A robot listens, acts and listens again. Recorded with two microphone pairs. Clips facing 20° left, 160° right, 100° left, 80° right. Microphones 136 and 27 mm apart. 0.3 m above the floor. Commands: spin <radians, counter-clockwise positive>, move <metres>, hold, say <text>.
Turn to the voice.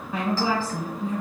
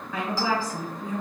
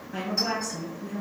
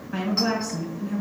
spin -0.70
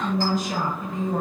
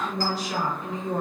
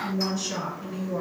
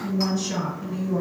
spin 0.17
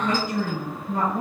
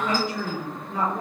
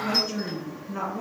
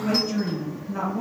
say Facing the woman speaking, 1 to 2 m away.